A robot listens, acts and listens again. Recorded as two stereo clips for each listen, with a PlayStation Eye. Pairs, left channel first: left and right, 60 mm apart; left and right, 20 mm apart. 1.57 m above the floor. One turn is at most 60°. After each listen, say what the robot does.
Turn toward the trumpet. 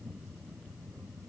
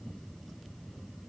Keep listening.
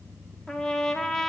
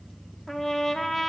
Turn 30° left.
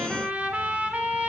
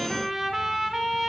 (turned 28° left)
Turn 25° right.
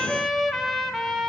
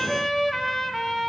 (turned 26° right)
Found it: a trumpet, straight ahead, 2 to 4 m away.